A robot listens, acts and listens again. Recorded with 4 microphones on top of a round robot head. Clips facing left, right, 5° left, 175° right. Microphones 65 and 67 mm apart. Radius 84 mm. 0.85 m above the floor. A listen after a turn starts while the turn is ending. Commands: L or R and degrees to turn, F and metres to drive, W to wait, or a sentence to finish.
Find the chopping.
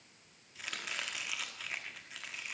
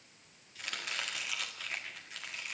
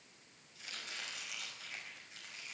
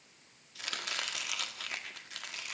L175
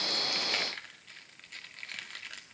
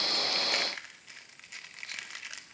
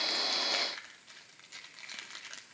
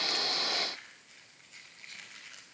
R10
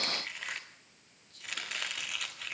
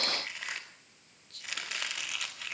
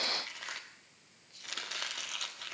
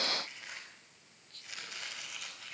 Facing the chopping, 1 to 2 m away.